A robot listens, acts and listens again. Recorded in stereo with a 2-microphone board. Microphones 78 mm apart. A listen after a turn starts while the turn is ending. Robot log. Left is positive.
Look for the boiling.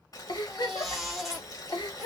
note: The boiling: about 50° left or 130° left.
cmd yaw +50
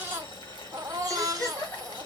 note: So it is at 75° left.
cmd yaw +75
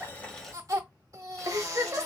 cmd idle
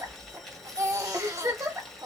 end: Facing the boiling.